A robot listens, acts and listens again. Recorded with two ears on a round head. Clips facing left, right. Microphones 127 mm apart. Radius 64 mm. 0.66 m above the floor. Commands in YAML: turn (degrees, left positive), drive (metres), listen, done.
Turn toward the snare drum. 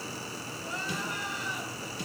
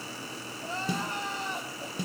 turn: -90
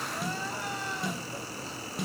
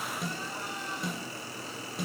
done: "Found it: a snare drum, straight ahead, over 4 m away."